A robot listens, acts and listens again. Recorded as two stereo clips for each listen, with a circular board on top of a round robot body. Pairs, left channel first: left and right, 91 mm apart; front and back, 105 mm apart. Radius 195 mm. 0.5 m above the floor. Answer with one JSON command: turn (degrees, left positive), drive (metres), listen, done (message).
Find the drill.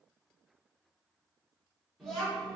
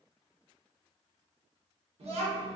{"listen": true}
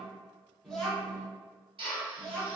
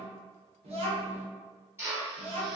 {"turn": -115}
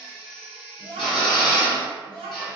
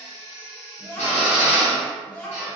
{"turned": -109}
{"done": "Found it: a drill, straight ahead, 1 to 2 m away."}